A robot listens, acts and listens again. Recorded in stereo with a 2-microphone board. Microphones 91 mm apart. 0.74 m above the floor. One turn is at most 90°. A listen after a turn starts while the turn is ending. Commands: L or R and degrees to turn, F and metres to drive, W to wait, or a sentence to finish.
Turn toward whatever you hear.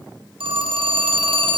R75
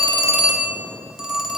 Found it: a phone ringing, straight ahead.